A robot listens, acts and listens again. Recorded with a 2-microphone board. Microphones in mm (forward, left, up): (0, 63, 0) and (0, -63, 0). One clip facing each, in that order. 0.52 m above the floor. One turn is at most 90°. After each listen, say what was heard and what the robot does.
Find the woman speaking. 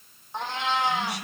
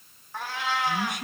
The woman speaking: about 55° right or 125° right. Turn 55° right.
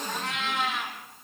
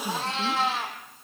Keep listening.
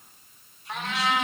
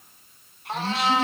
So it is at 70° right. Turn 70° right.
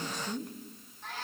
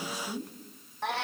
Found it: a woman speaking, straight ahead, over 4 m away.